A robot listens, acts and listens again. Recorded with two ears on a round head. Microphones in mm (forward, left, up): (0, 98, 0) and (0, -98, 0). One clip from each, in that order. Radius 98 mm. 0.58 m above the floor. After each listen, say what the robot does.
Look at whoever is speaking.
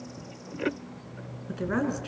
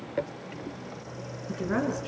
Turn 30° left.
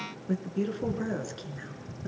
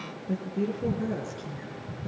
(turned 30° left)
Turn 140° left.
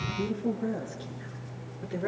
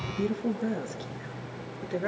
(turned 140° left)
Turn 20° right.
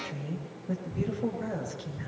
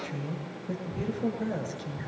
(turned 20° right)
Found it: a woman speaking, straight ahead.